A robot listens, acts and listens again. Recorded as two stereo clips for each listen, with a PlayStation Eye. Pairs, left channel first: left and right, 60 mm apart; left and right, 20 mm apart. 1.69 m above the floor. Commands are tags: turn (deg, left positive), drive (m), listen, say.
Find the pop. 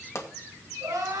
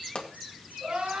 <turn deg="50"/>
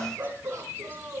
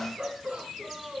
<listen/>
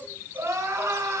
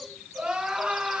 <say>I heard a pop, but can't make it out now. It was about straight ahead or 80° left.</say>